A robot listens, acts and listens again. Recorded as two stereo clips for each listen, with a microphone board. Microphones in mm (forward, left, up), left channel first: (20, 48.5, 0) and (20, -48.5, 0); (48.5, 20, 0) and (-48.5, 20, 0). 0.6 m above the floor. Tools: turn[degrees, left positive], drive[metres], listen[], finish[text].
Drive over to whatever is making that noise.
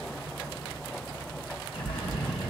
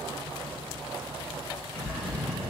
Thought: The bird: 75° left.
Action: turn[75]
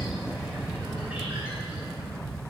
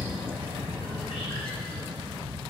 Thought: The bird is now 15° right.
Action: turn[-15]
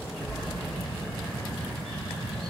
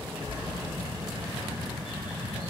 Action: drive[1.0]
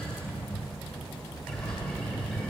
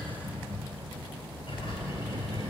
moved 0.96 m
Action: drive[1.0]
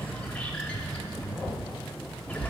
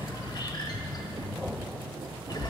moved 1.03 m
Thought: The bird is now 15° left.
Action: turn[15]
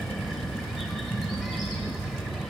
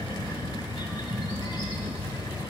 Action: drive[1.0]
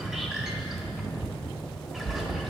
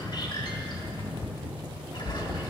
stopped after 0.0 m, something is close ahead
Thought: The bird is now 10° right.
Action: turn[-10]
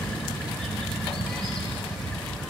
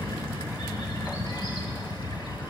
Action: finish[I am next to the bird.]